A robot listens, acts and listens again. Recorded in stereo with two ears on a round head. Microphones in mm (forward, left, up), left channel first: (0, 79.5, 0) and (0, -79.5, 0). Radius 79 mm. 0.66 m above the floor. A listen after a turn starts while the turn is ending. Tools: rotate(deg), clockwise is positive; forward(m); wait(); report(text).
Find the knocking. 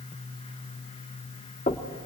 rotate(-40)
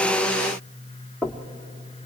report("Facing the knocking, 1 to 2 m away.")